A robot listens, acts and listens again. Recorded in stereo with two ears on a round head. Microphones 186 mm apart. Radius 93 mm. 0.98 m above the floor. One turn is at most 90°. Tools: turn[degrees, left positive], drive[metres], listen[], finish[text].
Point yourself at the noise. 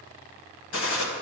Thought: The gunshot: about 70° left or 110° left.
Action: turn[70]
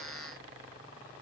Action: listen[]
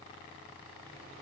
Action: finish[I heard a gunshot, but can't make it out now. It was about straight ahead or 40° left.]